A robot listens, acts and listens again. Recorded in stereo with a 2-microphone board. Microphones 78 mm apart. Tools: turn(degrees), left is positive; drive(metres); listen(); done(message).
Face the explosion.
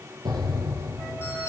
turn(degrees=-90)
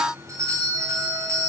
done("I heard an explosion from this way, but can't make it out now.")